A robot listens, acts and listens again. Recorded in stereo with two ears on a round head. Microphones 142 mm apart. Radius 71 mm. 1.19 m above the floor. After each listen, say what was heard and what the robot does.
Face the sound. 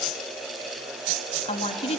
The woman speaking: about 35° left or 145° left. Turn 35° left.
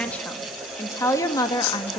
The woman speaking: about 25° left or 155° left. Turn 25° left.
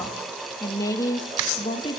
The woman speaking: about 30° left or 150° left. Turn 30° left.
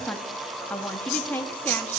So it is at 10° left. Turn 10° left.
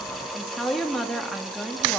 Facing the woman speaking, 1 to 2 m away.